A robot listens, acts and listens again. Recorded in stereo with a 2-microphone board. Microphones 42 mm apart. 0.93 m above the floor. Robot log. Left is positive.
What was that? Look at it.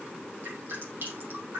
note: The dripping: about 60° right or 120° right.
cmd yaw -60
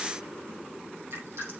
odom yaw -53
note: So it is at 65° right.
cmd yaw -65
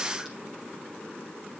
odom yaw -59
cmd idle
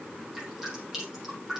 end: Found it: dripping, straight ahead, over 4 m away.